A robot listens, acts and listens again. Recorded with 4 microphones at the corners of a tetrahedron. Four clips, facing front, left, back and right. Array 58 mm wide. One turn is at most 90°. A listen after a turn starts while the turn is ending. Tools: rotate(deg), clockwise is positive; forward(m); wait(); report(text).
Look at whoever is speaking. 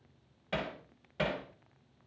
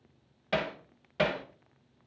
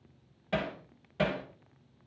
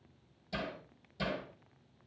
wait()
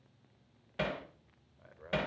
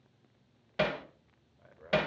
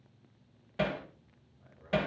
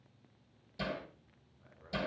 rotate(-35)
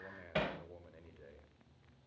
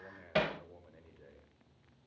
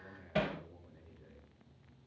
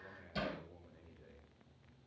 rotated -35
rotate(-25)
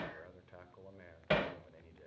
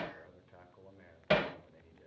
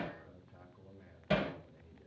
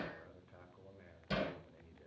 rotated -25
rotate(-10)
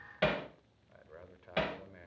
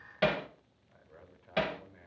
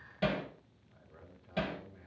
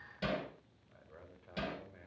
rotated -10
report("Facing the man speaking, 2 to 4 m away.")